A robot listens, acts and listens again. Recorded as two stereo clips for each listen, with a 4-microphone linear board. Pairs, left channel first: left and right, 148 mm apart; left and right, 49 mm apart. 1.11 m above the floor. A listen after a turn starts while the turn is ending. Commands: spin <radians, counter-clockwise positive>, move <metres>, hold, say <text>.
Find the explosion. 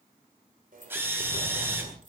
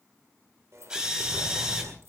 spin -1.05
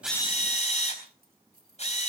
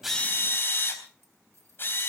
hold
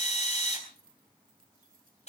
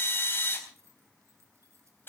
say I heard an explosion, but can't make it out now. It was about straight ahead or 60° right.